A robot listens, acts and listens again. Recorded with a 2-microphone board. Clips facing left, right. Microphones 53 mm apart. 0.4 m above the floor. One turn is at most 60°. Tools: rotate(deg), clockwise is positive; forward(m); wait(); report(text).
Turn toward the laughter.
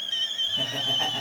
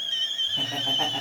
rotate(30)
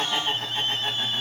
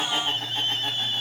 report("Found it: laughter, straight ahead, 2 to 4 m away.")